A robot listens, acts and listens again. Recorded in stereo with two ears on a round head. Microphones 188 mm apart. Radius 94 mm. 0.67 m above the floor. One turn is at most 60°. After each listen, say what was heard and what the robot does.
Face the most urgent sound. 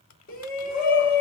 The shout: about 45° left or 135° left. Turn 45° left.
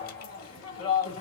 So it is at 85° left. Turn 60° left.
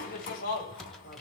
The shout is now 45° left. Turn 45° left.
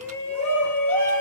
Facing the shout, 2 to 4 m away.